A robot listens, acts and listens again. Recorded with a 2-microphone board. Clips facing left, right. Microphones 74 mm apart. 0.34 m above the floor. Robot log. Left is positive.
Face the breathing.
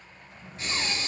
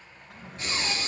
cmd yaw +30
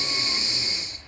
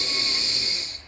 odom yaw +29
note: So it is at 150° left.
cmd yaw +150
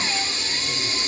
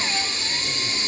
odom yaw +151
end: Facing the breathing, 1 to 2 m away.